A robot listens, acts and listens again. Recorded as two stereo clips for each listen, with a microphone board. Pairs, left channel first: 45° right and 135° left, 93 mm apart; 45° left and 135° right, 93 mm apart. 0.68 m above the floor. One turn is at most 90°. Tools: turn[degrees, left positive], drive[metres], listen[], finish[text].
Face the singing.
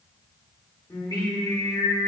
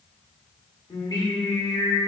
Action: finish[Found it: singing, straight ahead.]